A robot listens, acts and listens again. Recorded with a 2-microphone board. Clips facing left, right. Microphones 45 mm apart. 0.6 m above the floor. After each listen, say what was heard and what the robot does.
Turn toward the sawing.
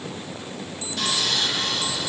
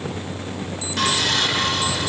The sawing: about 65° right or 115° right. Turn 65° right.
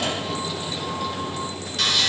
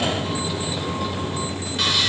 So it is at 15° right. Turn 15° right.
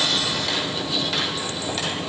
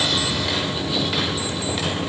The sawing is now 10° right. Turn 10° right.
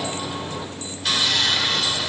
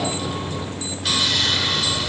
Found it: sawing, straight ahead.